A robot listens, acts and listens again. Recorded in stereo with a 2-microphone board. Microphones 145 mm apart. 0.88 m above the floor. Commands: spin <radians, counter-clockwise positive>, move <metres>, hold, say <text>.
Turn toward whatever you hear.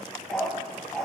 spin 0.52
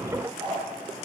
spin -0.52
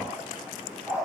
spin -0.17
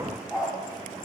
say Facing the dog barking.